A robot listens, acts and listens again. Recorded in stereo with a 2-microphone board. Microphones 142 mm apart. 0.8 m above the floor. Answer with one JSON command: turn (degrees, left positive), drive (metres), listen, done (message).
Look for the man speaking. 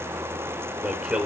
{"turn": -30}
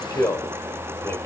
{"turn": 20}
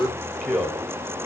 {"done": "Found it: a man speaking, straight ahead."}